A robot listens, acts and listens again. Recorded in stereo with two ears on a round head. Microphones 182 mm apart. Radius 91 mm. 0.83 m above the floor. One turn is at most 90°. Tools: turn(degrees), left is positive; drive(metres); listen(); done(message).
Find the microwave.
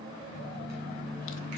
turn(degrees=-50)
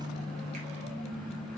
done("Facing the microwave, 2 to 4 m away.")